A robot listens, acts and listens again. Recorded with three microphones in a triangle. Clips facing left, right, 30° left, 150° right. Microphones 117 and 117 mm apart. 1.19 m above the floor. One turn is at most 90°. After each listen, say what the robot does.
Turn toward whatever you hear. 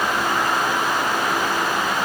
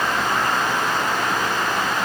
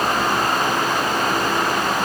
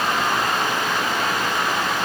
Keep listening.
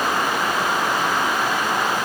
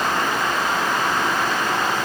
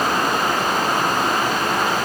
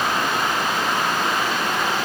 Keep listening.
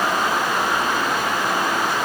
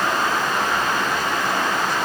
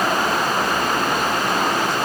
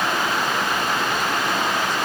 I can't make out anything.